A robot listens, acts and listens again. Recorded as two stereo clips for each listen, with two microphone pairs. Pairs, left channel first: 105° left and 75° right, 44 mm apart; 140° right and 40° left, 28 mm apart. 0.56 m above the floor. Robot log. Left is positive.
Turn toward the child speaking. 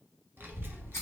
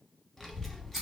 note: The child speaking: 60° right.
cmd yaw -60
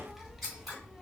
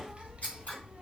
end: Facing the child speaking, under 1 m away.